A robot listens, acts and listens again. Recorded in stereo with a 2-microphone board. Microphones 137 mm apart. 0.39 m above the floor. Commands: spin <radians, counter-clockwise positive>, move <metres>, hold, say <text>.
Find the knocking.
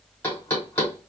spin 0.26
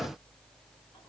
hold
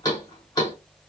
spin 2.62
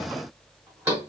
spin -0.35
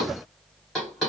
say Found it: knocking, straight ahead.